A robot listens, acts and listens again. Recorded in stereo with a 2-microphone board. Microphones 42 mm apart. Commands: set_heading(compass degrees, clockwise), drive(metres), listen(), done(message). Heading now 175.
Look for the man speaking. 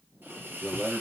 set_heading(145)
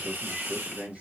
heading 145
set_heading(170)
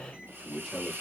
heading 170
done("Found it: a man speaking, straight ahead.")